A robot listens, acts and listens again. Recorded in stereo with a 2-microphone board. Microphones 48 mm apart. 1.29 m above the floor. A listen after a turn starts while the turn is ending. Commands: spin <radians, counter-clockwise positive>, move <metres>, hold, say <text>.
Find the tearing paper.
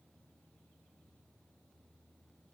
hold
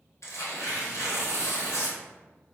spin 1.22
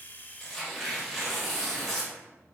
spin 0.17
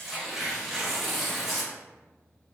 say Found it: tearing paper, straight ahead, 1 to 2 m away.